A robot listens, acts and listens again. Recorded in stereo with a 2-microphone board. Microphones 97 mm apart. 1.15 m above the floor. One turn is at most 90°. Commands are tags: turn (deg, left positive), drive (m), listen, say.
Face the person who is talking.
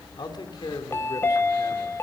<turn deg="50"/>
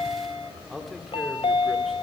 <say>Found it: a man speaking, straight ahead, 2 to 4 m away.</say>